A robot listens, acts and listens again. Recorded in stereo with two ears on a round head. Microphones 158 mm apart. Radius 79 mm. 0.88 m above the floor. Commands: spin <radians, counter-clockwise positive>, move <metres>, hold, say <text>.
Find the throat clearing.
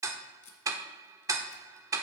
hold
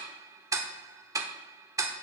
hold
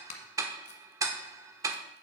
say I can't make out throat clearing to turn to.